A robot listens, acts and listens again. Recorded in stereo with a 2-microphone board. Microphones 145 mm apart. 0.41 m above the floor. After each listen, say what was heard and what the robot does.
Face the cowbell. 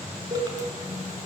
The cowbell: about 55° right or 125° right. Turn 55° right.
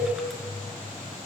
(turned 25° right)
So it is at 95° right. Turn 95° right.
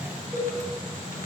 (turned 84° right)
The cowbell is now 10° right. Turn 10° right.
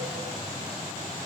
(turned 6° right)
Keep listening.
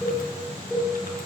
Found it: a cowbell, straight ahead.